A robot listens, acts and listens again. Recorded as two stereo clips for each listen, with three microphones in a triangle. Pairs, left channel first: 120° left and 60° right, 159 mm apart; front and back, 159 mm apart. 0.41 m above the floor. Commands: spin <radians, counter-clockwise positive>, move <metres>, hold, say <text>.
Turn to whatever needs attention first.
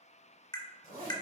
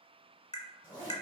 hold
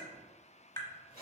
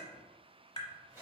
hold
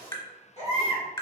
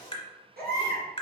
spin 2.88
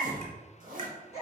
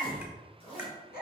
spin 0.17
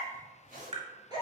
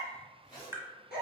say Facing the baby crying.